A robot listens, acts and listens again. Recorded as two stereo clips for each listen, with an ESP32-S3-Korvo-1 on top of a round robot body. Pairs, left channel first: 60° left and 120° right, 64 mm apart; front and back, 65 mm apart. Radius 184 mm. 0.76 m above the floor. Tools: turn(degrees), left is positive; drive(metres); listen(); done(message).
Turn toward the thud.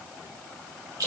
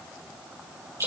listen()
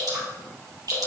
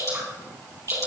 listen()
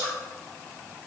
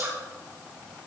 done("I can't make out a thud, only dripping.")